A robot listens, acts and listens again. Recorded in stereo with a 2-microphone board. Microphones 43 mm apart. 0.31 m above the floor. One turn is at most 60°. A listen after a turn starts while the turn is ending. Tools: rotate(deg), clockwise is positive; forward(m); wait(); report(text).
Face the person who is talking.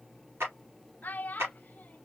rotate(-40)
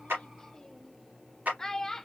rotate(-10)
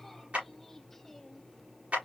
report("Facing the child speaking.")